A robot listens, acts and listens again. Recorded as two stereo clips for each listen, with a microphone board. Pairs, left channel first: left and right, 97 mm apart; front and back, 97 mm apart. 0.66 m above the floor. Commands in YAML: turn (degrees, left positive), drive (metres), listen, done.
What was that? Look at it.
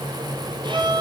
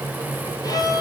turn: -50
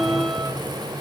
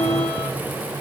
listen: true
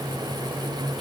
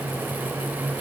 listen: true
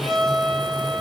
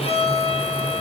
done: "Facing the violin."